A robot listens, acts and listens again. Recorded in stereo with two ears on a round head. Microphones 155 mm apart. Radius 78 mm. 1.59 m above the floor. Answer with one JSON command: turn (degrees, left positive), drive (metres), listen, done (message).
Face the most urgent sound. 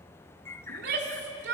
{"turn": -65}
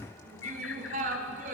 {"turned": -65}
{"turn": -50}
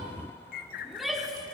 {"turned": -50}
{"done": "Facing the shout, 2 to 4 m away."}